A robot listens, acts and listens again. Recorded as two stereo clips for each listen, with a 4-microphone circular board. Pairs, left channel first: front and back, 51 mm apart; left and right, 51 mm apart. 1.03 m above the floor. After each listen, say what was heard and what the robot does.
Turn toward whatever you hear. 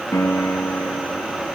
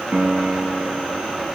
The piano: 25° right. Turn 25° right.
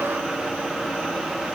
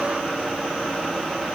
Keep listening.
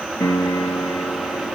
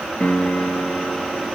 The piano is now 20° left. Turn 20° left.
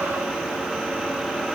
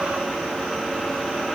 Keep listening.
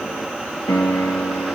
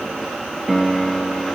Found it: a piano, straight ahead.